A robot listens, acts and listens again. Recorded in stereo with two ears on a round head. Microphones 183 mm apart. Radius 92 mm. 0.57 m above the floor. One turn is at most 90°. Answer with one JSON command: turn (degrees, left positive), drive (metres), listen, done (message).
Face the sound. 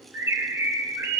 {"turn": -30}
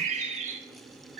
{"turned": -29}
{"turn": -90}
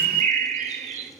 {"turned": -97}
{"turn": -40}
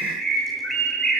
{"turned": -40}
{"done": "Found it: a bird, straight ahead, 1 to 2 m away."}